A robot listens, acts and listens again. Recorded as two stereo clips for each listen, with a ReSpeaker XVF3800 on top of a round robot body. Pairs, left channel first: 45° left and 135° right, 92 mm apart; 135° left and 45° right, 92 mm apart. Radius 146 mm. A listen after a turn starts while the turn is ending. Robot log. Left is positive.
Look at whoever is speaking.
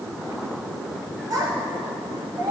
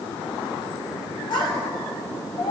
note: The child speaking: 170° left.
cmd yaw +170
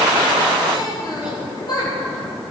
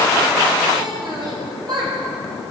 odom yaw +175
end: Found it: a child speaking, straight ahead.